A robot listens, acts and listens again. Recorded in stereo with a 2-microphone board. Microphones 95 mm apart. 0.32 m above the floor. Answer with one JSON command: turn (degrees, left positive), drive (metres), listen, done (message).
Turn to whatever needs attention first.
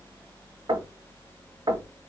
{"listen": true}
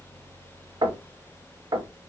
{"listen": true}
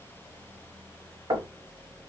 {"done": "I can't make out anything urgent, only knocking."}